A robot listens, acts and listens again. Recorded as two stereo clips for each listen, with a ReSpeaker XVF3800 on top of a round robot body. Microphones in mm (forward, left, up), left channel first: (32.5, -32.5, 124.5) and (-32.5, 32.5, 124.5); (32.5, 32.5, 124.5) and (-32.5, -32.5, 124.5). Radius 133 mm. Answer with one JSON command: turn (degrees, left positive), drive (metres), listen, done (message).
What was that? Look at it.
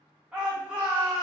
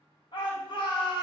{"turn": 55}
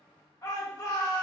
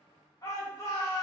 {"done": "Facing the shout."}